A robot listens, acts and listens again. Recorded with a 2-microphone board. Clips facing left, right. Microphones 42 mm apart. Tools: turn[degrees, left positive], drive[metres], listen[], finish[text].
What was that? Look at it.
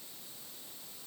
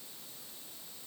Action: listen[]
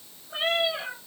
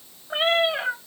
Thought: The cat meowing: about 40° right or 140° right.
Action: turn[-40]
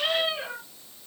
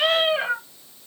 Thought: So it is at 120° right.
Action: turn[-120]
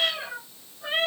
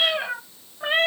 Thought: The cat meowing is now 55° right.
Action: turn[-55]
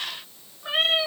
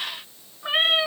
Thought: The cat meowing is now 30° right.
Action: turn[-30]
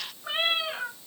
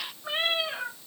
Action: finish[Facing the cat meowing, 2 to 4 m away.]